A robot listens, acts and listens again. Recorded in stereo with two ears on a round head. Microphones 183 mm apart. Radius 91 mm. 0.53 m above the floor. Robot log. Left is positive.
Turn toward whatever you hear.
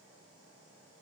cmd idle
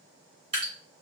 note: The dripping: about 30° right or 150° right.
cmd yaw -30
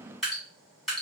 end: Facing the dripping.